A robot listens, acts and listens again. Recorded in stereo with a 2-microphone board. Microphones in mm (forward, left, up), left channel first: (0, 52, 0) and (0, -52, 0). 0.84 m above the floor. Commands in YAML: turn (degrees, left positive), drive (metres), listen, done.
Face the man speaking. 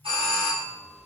listen: true
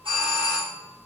listen: true
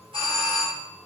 done: "I can't make out a man speaking to turn to."